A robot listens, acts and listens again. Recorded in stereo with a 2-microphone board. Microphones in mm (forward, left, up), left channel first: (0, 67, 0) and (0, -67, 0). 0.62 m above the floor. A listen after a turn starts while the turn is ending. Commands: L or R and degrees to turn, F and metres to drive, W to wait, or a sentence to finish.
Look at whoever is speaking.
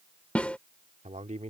R55
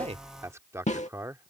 R25
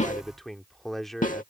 Facing the man speaking.